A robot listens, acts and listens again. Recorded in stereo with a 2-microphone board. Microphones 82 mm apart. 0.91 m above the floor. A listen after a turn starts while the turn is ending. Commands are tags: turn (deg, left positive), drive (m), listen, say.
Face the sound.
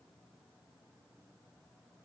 <listen/>
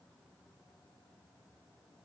<listen/>
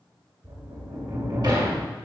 <turn deg="-60"/>
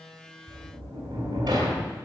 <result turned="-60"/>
<turn deg="-60"/>
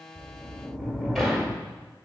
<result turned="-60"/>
<say>Facing the sliding door, 1 to 2 m away.</say>